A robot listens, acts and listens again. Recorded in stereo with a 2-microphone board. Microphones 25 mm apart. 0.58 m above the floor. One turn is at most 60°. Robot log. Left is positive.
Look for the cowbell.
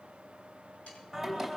cmd idle
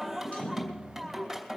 cmd idle
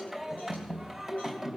end: I can't make out a cowbell, only singing.